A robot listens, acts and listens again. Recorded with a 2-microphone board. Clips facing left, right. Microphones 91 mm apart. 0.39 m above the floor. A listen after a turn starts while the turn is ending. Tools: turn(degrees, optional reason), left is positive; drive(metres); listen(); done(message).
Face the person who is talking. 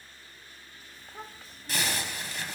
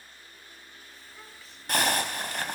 turn(degrees=45, reason="The child speaking: about 45° left or 135° left.")
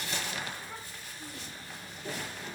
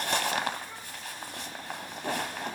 listen()
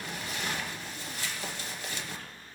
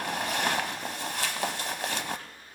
listen()
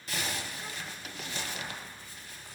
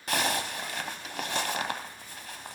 done("I heard a child speaking, but can't make it out now. It was about straight ahead or 90° left.")